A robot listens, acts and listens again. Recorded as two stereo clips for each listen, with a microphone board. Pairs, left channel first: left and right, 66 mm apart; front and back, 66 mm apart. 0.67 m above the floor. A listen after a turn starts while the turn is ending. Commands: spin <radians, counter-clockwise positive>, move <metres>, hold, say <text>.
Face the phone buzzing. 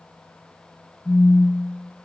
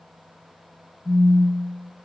say Found it: a phone buzzing, straight ahead, under 1 m away.